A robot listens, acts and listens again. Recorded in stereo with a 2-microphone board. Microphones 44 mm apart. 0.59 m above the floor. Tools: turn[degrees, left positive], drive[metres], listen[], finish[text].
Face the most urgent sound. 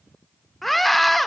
Action: turn[30]
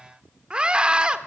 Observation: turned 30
Thought: So it is at 25° right.
Action: turn[-25]
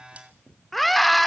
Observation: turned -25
Action: finish[Facing the scream.]